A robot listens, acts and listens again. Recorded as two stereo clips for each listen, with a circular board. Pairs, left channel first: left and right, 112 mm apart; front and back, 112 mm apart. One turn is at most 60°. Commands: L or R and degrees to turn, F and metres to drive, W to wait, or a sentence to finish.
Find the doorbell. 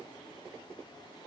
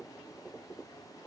W
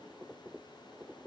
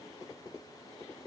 W
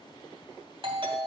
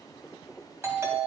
R60
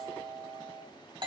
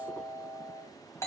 R60
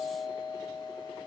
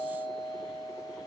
Facing the doorbell, 2 to 4 m away.